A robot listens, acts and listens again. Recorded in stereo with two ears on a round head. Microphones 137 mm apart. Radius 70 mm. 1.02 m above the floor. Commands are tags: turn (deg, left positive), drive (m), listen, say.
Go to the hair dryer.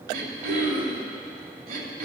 <listen/>
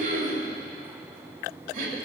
<listen/>
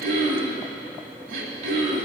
<say>I can't make out a hair dryer, only throat clearing.</say>